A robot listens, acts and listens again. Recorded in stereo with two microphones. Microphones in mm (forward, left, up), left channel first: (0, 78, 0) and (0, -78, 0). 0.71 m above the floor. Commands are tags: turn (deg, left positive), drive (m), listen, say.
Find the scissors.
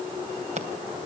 <turn deg="-50"/>
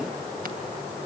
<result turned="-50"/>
<listen/>
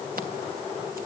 <listen/>
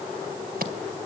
<turn deg="-80"/>
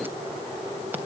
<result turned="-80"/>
<listen/>
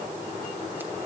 <listen/>
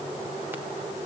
<say>Facing where the scissors came from. I can't hear it now.</say>